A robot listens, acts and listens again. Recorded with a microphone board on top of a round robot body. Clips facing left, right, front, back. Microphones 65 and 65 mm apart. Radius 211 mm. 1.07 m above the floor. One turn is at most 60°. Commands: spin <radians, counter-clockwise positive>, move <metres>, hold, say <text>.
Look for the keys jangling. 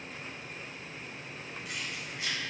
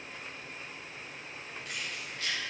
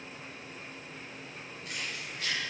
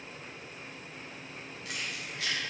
spin 1.05
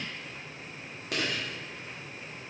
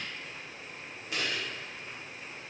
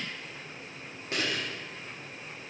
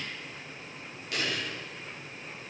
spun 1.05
spin 1.05
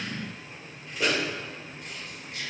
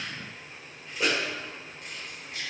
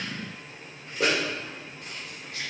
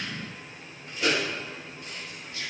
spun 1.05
say Found it: keys jangling, straight ahead.